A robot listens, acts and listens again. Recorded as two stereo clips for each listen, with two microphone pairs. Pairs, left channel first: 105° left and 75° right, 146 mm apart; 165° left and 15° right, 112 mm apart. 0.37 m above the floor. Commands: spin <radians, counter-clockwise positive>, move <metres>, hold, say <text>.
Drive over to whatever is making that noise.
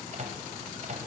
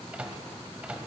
spin -1.57
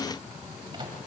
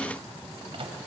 spin -0.44
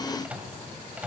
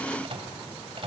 move 1.0
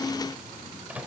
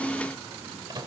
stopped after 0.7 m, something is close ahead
say Arrived at the microwave, straight ahead.